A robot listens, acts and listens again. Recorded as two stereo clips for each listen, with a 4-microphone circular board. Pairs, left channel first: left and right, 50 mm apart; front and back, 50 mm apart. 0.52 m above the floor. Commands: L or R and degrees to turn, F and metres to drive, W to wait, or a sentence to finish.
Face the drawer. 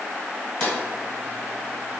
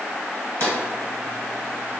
L160
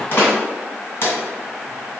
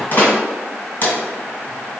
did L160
L45
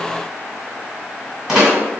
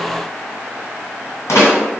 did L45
R15
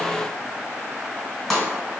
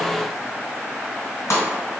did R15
Facing the drawer, 1 to 2 m away.